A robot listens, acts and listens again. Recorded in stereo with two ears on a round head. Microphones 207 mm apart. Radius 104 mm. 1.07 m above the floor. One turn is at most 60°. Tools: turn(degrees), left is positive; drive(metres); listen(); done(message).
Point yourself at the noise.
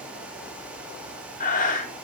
turn(degrees=40)
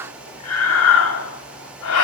turn(degrees=60)
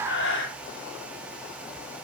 turn(degrees=55)
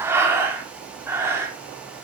turn(degrees=-10)
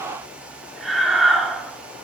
done("Facing the breathing.")